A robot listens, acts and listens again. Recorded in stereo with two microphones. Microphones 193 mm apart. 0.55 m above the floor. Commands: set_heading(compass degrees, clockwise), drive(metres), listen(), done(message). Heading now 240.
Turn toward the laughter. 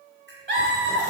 set_heading(305)
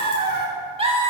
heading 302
set_heading(332)
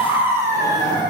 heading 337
set_heading(2)
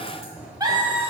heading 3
set_heading(28)
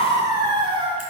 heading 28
set_heading(58)
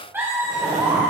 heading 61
set_heading(76)
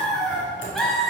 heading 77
done("Facing the laughter, 2 to 4 m away.")